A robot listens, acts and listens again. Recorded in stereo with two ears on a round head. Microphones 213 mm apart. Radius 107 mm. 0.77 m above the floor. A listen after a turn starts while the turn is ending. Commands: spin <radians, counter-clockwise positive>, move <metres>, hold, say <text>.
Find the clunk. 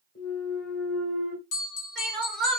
spin 0.70
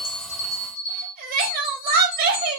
hold
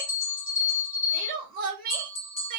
say I heard a clunk, but can't make it out now. It was about straight ahead or 100° left.